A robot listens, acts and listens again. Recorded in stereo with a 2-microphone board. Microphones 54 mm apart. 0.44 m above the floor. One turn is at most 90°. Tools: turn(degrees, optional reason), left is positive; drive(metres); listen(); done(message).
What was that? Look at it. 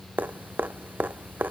turn(degrees=-35, reason="The dripping: about 35° right or 145° right.")
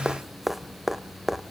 done("Found it: dripping, straight ahead, under 1 m away.")